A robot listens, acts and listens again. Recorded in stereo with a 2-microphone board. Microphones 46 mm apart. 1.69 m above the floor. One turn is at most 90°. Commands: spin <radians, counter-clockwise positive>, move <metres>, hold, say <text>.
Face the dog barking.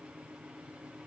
hold
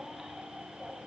hold
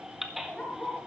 spin 0.44
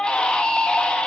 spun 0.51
hold
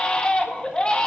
hold
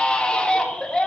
say I heard a dog barking, but can't make it out now. It was about 5° right or 130° left.